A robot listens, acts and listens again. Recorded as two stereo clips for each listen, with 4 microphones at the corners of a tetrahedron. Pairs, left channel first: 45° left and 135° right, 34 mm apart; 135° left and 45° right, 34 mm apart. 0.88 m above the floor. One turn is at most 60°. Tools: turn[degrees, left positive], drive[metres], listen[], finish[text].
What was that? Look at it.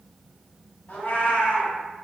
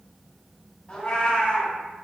Thought: The cat meowing: 70° left.
Action: turn[60]
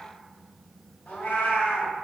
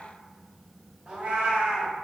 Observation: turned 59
Thought: The cat meowing is now 15° left.
Action: turn[15]
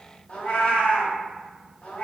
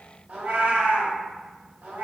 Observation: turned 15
Action: finish[Found it: a cat meowing, straight ahead, under 1 m away.]